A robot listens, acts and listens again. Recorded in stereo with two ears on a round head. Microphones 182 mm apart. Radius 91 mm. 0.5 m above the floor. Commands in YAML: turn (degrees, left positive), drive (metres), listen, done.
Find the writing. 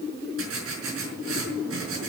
turn: -90
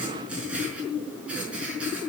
done: "Facing the writing, over 4 m away."